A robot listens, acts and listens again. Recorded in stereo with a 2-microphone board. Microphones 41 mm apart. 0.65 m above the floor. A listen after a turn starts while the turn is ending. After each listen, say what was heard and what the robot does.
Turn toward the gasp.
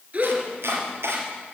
The gasp: about 35° right or 145° right. Turn 35° right.
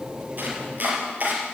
Keep listening.
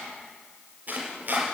I heard a gasp, but can't make it out now. It was about straight ahead or 110° right.